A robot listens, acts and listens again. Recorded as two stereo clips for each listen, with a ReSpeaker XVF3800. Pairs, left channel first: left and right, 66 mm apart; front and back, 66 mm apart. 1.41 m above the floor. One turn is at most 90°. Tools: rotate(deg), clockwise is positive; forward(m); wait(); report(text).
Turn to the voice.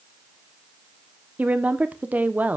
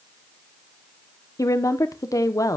rotate(25)
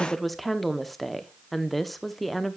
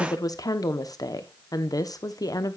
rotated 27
report("Facing the woman speaking, 1 to 2 m away.")